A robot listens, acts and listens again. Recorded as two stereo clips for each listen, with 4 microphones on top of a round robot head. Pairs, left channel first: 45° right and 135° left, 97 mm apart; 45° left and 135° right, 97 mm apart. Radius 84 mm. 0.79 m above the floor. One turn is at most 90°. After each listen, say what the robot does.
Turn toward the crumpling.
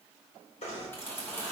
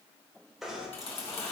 Turn 25° left.
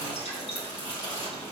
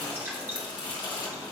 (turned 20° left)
Facing the crumpling, 2 to 4 m away.